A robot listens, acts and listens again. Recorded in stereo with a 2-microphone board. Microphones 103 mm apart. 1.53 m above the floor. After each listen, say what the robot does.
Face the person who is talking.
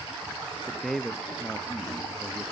Turn 30° left.
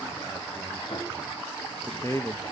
Turn 150° left.
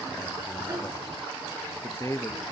Turn 35° left.
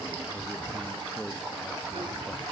Turn 10° left.
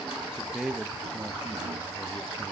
Found it: a man speaking, straight ahead, under 1 m away.